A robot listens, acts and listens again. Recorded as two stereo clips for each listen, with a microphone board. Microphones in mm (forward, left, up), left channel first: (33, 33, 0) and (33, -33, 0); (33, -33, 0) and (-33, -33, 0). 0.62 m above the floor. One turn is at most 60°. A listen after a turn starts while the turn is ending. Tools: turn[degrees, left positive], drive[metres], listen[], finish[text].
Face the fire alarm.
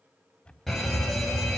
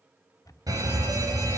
Thought: The fire alarm: 175° left.
Action: turn[60]
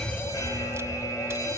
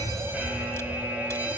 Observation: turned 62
Thought: The fire alarm is now 115° left.
Action: turn[60]
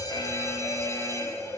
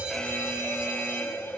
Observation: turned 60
Thought: The fire alarm is now 55° left.
Action: turn[55]
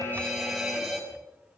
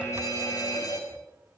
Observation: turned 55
Action: finish[Found it: a fire alarm, straight ahead.]